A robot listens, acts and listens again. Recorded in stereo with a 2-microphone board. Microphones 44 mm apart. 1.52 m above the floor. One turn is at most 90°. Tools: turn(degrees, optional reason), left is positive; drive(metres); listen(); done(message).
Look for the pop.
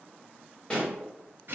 turn(degrees=25, reason="The pop: about 25° left or 155° left.")
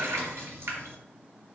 listen()
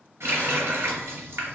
done("I heard a pop, but can't make it out now. It was about straight ahead or 130° left.")